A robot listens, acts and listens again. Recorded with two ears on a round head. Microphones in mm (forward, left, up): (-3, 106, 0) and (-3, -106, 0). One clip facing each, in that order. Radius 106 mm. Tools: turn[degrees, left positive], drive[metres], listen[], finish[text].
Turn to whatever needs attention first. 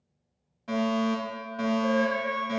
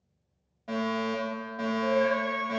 Thought: The fire alarm: about 15° left or 165° left.
Action: turn[15]
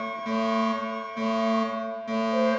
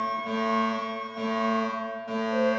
Thought: So it is at 150° left.
Action: turn[150]
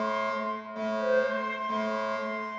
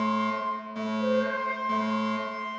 Thought: The fire alarm is now 25° right.
Action: turn[-25]
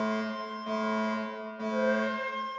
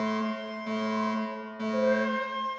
Thought: The fire alarm is now 20° right.
Action: turn[-20]
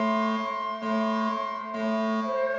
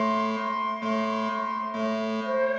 Action: finish[Found it: a fire alarm, straight ahead, 2 to 4 m away.]